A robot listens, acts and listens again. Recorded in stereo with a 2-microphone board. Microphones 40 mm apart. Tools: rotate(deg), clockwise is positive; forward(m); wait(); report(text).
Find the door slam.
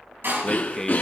rotate(70)
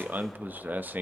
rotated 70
wait()
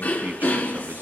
report("I heard a door slam, but can't make it out now. It was about straight ahead or 40° right.")